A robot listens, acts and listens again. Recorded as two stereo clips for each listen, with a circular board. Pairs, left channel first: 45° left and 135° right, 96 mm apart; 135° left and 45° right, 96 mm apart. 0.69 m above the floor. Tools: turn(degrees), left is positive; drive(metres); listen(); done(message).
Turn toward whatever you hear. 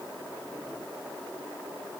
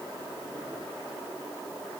listen()
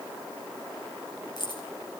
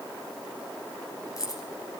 turn(degrees=85)
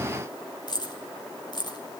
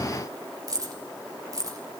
done("Found it: keys jangling, straight ahead, 2 to 4 m away.")